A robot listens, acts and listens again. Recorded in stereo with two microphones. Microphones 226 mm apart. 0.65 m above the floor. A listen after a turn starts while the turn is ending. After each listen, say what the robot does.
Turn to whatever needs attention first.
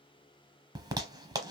Keep listening.
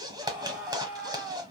Turn 30° right.
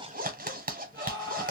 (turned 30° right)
Turn 20° left.
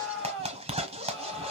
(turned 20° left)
Found it: a scream, straight ahead, 1 to 2 m away.